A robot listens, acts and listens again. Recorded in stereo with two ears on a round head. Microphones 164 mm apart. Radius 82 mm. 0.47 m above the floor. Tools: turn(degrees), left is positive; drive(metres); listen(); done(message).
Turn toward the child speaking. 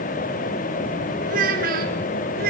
turn(degrees=-55)
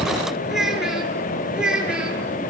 done("Facing the child speaking.")